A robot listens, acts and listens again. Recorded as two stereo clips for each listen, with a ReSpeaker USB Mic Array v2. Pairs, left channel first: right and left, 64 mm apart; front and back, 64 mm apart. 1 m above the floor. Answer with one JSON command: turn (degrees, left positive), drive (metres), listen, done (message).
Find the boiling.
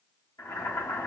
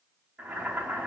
{"turn": -115}
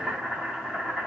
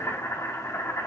{"turn": 20}
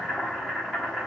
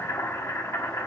{"done": "Facing the boiling."}